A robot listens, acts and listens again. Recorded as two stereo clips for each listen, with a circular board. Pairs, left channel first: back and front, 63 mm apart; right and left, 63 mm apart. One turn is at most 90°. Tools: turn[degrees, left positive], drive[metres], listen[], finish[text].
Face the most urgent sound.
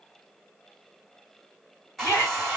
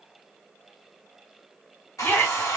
Thought: The shout: 145° right.
Action: turn[-90]
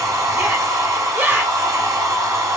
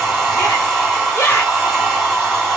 Thought: The shout is now 55° right.
Action: turn[-55]
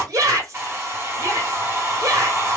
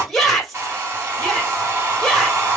Action: finish[Found it: a shout, straight ahead.]